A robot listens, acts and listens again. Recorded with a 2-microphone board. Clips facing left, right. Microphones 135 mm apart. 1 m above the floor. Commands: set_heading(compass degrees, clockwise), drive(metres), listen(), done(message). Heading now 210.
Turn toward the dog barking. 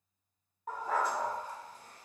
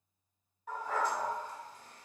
set_heading(165)
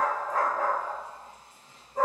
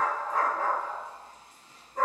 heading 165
set_heading(140)
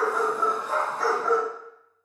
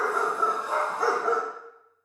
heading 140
set_heading(160)
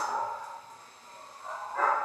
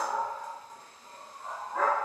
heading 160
set_heading(175)
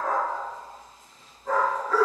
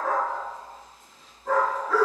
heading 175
done("Found it: a dog barking, straight ahead, 1 to 2 m away.")